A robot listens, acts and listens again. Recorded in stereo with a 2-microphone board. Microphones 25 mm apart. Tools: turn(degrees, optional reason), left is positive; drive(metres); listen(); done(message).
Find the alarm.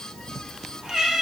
listen()
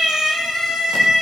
listen()
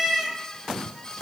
done("I can't make out an alarm to turn to.")